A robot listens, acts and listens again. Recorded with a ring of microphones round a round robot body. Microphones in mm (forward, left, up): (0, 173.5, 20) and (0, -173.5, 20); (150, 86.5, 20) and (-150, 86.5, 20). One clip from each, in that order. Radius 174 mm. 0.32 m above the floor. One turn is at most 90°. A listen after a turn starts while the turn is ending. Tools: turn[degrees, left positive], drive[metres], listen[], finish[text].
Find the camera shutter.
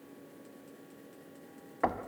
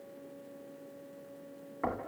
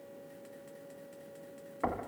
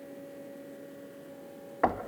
Action: listen[]
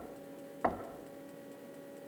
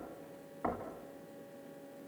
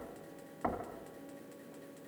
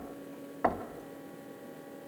Action: listen[]
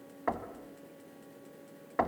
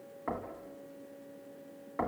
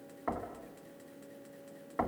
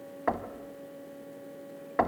Action: finish[I can't make out a camera shutter, only knocking.]